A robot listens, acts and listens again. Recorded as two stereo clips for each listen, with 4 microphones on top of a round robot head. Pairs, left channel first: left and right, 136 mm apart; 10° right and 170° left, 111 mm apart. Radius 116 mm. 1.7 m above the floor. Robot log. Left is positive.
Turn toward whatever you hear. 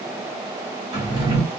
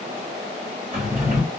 note: The drawer: 140° right.
cmd yaw -140
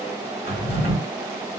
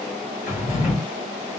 end: Found it: a drawer, straight ahead.